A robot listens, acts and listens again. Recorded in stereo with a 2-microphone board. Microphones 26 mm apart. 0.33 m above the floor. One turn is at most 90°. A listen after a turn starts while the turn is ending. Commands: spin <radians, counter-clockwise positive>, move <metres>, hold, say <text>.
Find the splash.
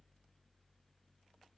hold
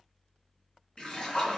spin 0.61
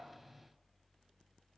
hold
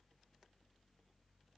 say I heard a splash, but can't make it out now. It was about straight ahead or 110° left.